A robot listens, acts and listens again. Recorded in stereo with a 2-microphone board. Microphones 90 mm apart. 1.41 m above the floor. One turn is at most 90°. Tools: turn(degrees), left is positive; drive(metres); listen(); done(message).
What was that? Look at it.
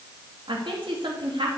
turn(degrees=-70)
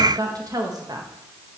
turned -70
turn(degrees=-50)
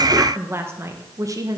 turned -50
turn(degrees=-50)
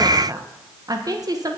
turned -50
turn(degrees=-50)
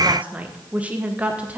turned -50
turn(degrees=-20)
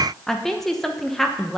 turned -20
done("Facing the woman speaking.")